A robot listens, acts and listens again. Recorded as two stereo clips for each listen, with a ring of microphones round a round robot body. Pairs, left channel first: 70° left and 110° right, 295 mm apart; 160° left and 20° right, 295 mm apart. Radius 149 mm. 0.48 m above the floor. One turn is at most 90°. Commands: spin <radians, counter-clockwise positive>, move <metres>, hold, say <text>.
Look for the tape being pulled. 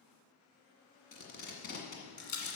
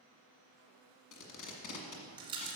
spin 1.57
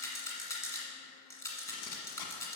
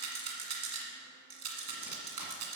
spin 0.61
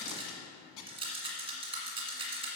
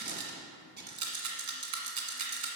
spin 0.61
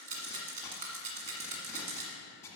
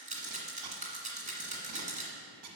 spin -0.26
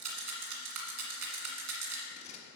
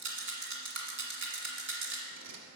say Facing the tape being pulled, 1 to 2 m away.